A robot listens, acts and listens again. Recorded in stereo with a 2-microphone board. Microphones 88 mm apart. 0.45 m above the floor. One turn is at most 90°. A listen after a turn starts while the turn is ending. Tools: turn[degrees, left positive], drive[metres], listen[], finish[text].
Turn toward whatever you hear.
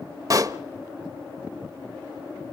Thought: The pop: about 40° right or 140° right.
Action: turn[-40]
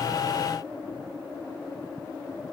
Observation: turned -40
Action: listen[]
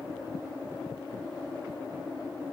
Action: finish[I heard a pop, but can't make it out now. It was about straight ahead or 100° right.]